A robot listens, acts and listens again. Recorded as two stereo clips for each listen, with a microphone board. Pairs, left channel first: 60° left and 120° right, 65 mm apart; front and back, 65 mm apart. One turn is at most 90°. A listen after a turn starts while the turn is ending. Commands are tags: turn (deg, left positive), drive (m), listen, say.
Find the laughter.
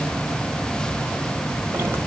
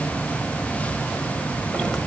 <listen/>
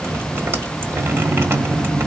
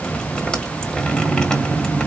<listen/>
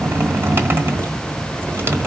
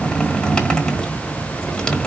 <say>I can't make out laughter, only dripping.</say>